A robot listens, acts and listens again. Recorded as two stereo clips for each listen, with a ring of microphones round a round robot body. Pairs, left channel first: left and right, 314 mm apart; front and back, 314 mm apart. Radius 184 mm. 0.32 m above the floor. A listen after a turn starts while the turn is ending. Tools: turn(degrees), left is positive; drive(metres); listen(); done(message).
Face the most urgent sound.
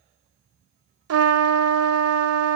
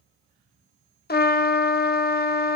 listen()
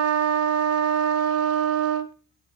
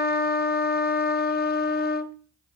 listen()
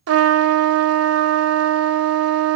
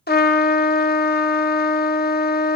done("I can't make out anything urgent to turn to.")